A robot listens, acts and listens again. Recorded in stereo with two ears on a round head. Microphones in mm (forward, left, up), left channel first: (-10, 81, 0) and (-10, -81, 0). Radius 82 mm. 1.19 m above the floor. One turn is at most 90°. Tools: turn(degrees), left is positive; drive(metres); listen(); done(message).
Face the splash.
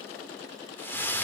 turn(degrees=30)
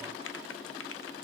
listen()
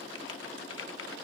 done("I heard a splash, but can't make it out now. It was about 20° right or 140° left.")